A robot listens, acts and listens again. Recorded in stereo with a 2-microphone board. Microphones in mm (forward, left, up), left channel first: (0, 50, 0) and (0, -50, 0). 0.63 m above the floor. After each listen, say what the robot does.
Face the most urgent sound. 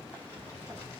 Keep listening.
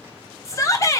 Turn 30° left.
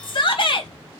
Turn 110° left.
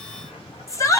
Turn 35° left.
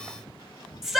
Facing the shout.